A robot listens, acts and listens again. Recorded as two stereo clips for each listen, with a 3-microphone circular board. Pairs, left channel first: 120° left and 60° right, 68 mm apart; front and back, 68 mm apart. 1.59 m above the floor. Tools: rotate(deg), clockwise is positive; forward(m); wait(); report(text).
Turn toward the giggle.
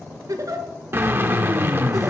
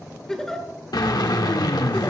rotate(85)
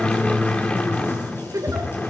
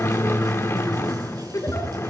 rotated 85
rotate(30)
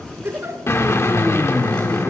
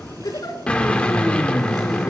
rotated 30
report("Facing the giggle.")